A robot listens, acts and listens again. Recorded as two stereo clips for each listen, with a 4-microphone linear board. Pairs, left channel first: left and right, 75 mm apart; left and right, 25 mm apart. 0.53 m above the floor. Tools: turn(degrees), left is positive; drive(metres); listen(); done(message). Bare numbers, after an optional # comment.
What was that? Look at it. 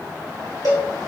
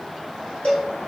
# The cowbell: about 60° left or 120° left.
turn(60)
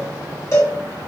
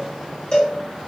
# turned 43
# So it is at 50° left.
turn(50)
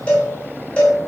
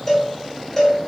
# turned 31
# The cowbell is now 20° left.
turn(20)
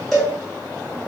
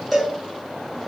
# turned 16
done("Facing the cowbell.")